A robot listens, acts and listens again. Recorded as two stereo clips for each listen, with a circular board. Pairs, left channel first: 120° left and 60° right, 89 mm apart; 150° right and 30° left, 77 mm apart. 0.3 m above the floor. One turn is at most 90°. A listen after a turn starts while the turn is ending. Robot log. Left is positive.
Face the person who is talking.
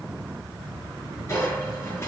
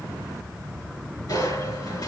cmd idle
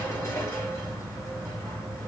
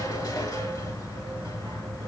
cmd idle
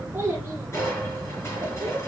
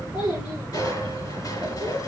note: The child speaking: 130° right.
cmd yaw -90
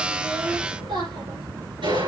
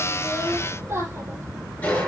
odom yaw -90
note: The child speaking is now 30° right.
cmd yaw -30
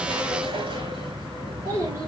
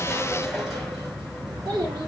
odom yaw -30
end: Found it: a child speaking, straight ahead, over 4 m away.